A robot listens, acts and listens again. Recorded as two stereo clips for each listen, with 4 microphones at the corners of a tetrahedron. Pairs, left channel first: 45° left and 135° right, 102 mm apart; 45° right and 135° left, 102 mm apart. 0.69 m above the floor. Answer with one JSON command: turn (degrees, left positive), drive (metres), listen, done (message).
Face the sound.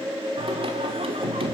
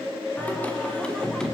{"turn": -130}
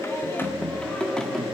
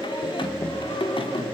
{"turn": -45}
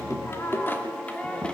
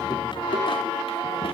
{"turn": -35}
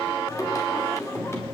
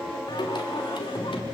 {"turn": -20}
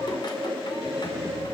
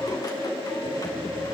{"listen": true}
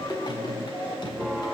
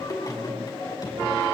{"done": "Facing the singing."}